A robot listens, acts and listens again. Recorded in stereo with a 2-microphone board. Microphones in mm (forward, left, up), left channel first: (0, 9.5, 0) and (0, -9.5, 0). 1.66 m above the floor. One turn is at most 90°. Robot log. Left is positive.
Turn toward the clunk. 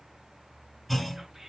cmd yaw +30
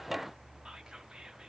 cmd idle
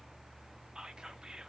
end: I heard a clunk, but can't make it out now. It was about 25° right or 145° left.